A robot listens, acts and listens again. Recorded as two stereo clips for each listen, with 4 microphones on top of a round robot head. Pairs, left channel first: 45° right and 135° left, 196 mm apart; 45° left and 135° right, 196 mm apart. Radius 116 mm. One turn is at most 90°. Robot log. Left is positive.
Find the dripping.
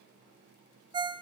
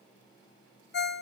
cmd idle
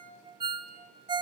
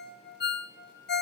cmd idle
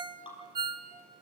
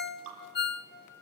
note: The dripping: 110° right.
cmd yaw -90
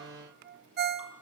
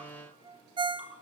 note: Nothing new. It was at 20° right.
cmd yaw -20
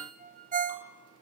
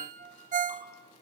cmd idle
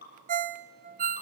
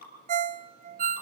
end: Facing the dripping, over 4 m away.